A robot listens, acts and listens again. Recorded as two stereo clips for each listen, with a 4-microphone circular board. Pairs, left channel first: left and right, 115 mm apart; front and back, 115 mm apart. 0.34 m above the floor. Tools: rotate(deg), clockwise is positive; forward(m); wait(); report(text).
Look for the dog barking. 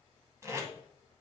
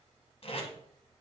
wait()
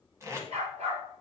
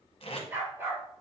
rotate(110)
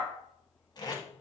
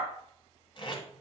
rotate(45)
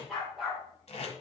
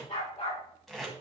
report("Found it: a dog barking, straight ahead, over 4 m away.")